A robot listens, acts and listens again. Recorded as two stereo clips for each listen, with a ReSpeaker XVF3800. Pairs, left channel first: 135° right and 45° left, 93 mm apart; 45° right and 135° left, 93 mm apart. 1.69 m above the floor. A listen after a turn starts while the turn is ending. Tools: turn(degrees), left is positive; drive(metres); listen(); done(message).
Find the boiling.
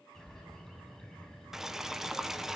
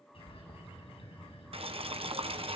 turn(degrees=130)
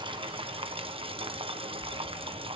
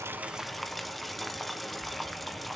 turn(degrees=45)
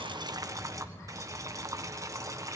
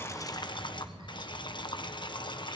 turn(degrees=-10)
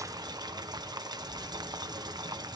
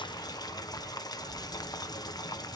done("Facing the boiling.")